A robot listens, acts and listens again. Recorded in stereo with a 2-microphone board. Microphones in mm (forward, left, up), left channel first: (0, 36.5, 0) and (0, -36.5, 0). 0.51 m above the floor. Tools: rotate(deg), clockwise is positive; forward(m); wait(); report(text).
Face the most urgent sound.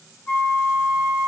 wait()
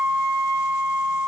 wait()
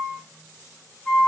report("I can't make out anything urgent to turn to.")